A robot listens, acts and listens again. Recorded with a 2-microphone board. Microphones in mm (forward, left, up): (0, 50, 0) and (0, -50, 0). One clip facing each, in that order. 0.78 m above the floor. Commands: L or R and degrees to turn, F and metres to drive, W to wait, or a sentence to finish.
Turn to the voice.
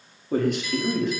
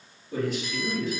L60
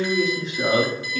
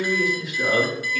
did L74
L30
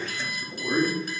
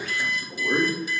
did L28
Found it: a man speaking, straight ahead, 1 to 2 m away.